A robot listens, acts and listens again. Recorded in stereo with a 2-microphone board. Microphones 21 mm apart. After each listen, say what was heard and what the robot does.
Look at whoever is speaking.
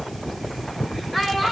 The child speaking: about 25° left or 155° left. Turn 25° left.
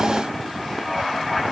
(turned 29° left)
Keep listening.
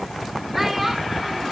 Found it: a child speaking, straight ahead, 2 to 4 m away.